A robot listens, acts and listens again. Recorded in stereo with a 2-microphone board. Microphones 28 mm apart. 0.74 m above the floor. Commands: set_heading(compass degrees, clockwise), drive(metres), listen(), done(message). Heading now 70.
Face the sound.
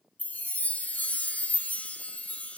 set_heading(0)
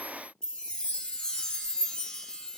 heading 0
set_heading(330)
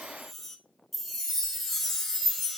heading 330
set_heading(320)
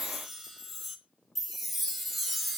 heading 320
done("Found it: a chime, straight ahead.")